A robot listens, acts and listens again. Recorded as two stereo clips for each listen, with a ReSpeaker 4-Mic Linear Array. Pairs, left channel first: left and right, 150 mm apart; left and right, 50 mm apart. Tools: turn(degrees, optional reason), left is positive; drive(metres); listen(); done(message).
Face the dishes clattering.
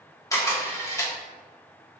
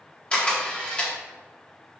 listen()
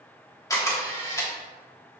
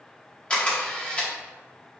listen()
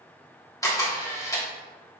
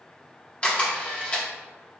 done("I can't make out dishes clattering, only a camera shutter.")